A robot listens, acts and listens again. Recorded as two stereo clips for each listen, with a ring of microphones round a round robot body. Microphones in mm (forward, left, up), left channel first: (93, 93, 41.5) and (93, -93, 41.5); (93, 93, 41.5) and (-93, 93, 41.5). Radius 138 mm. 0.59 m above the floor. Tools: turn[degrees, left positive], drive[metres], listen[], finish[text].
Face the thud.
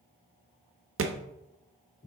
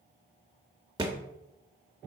Thought: The thud: 105° right.
Action: turn[-105]
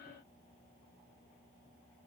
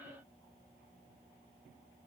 Action: finish[Facing where the thud came from. I can't hear it now.]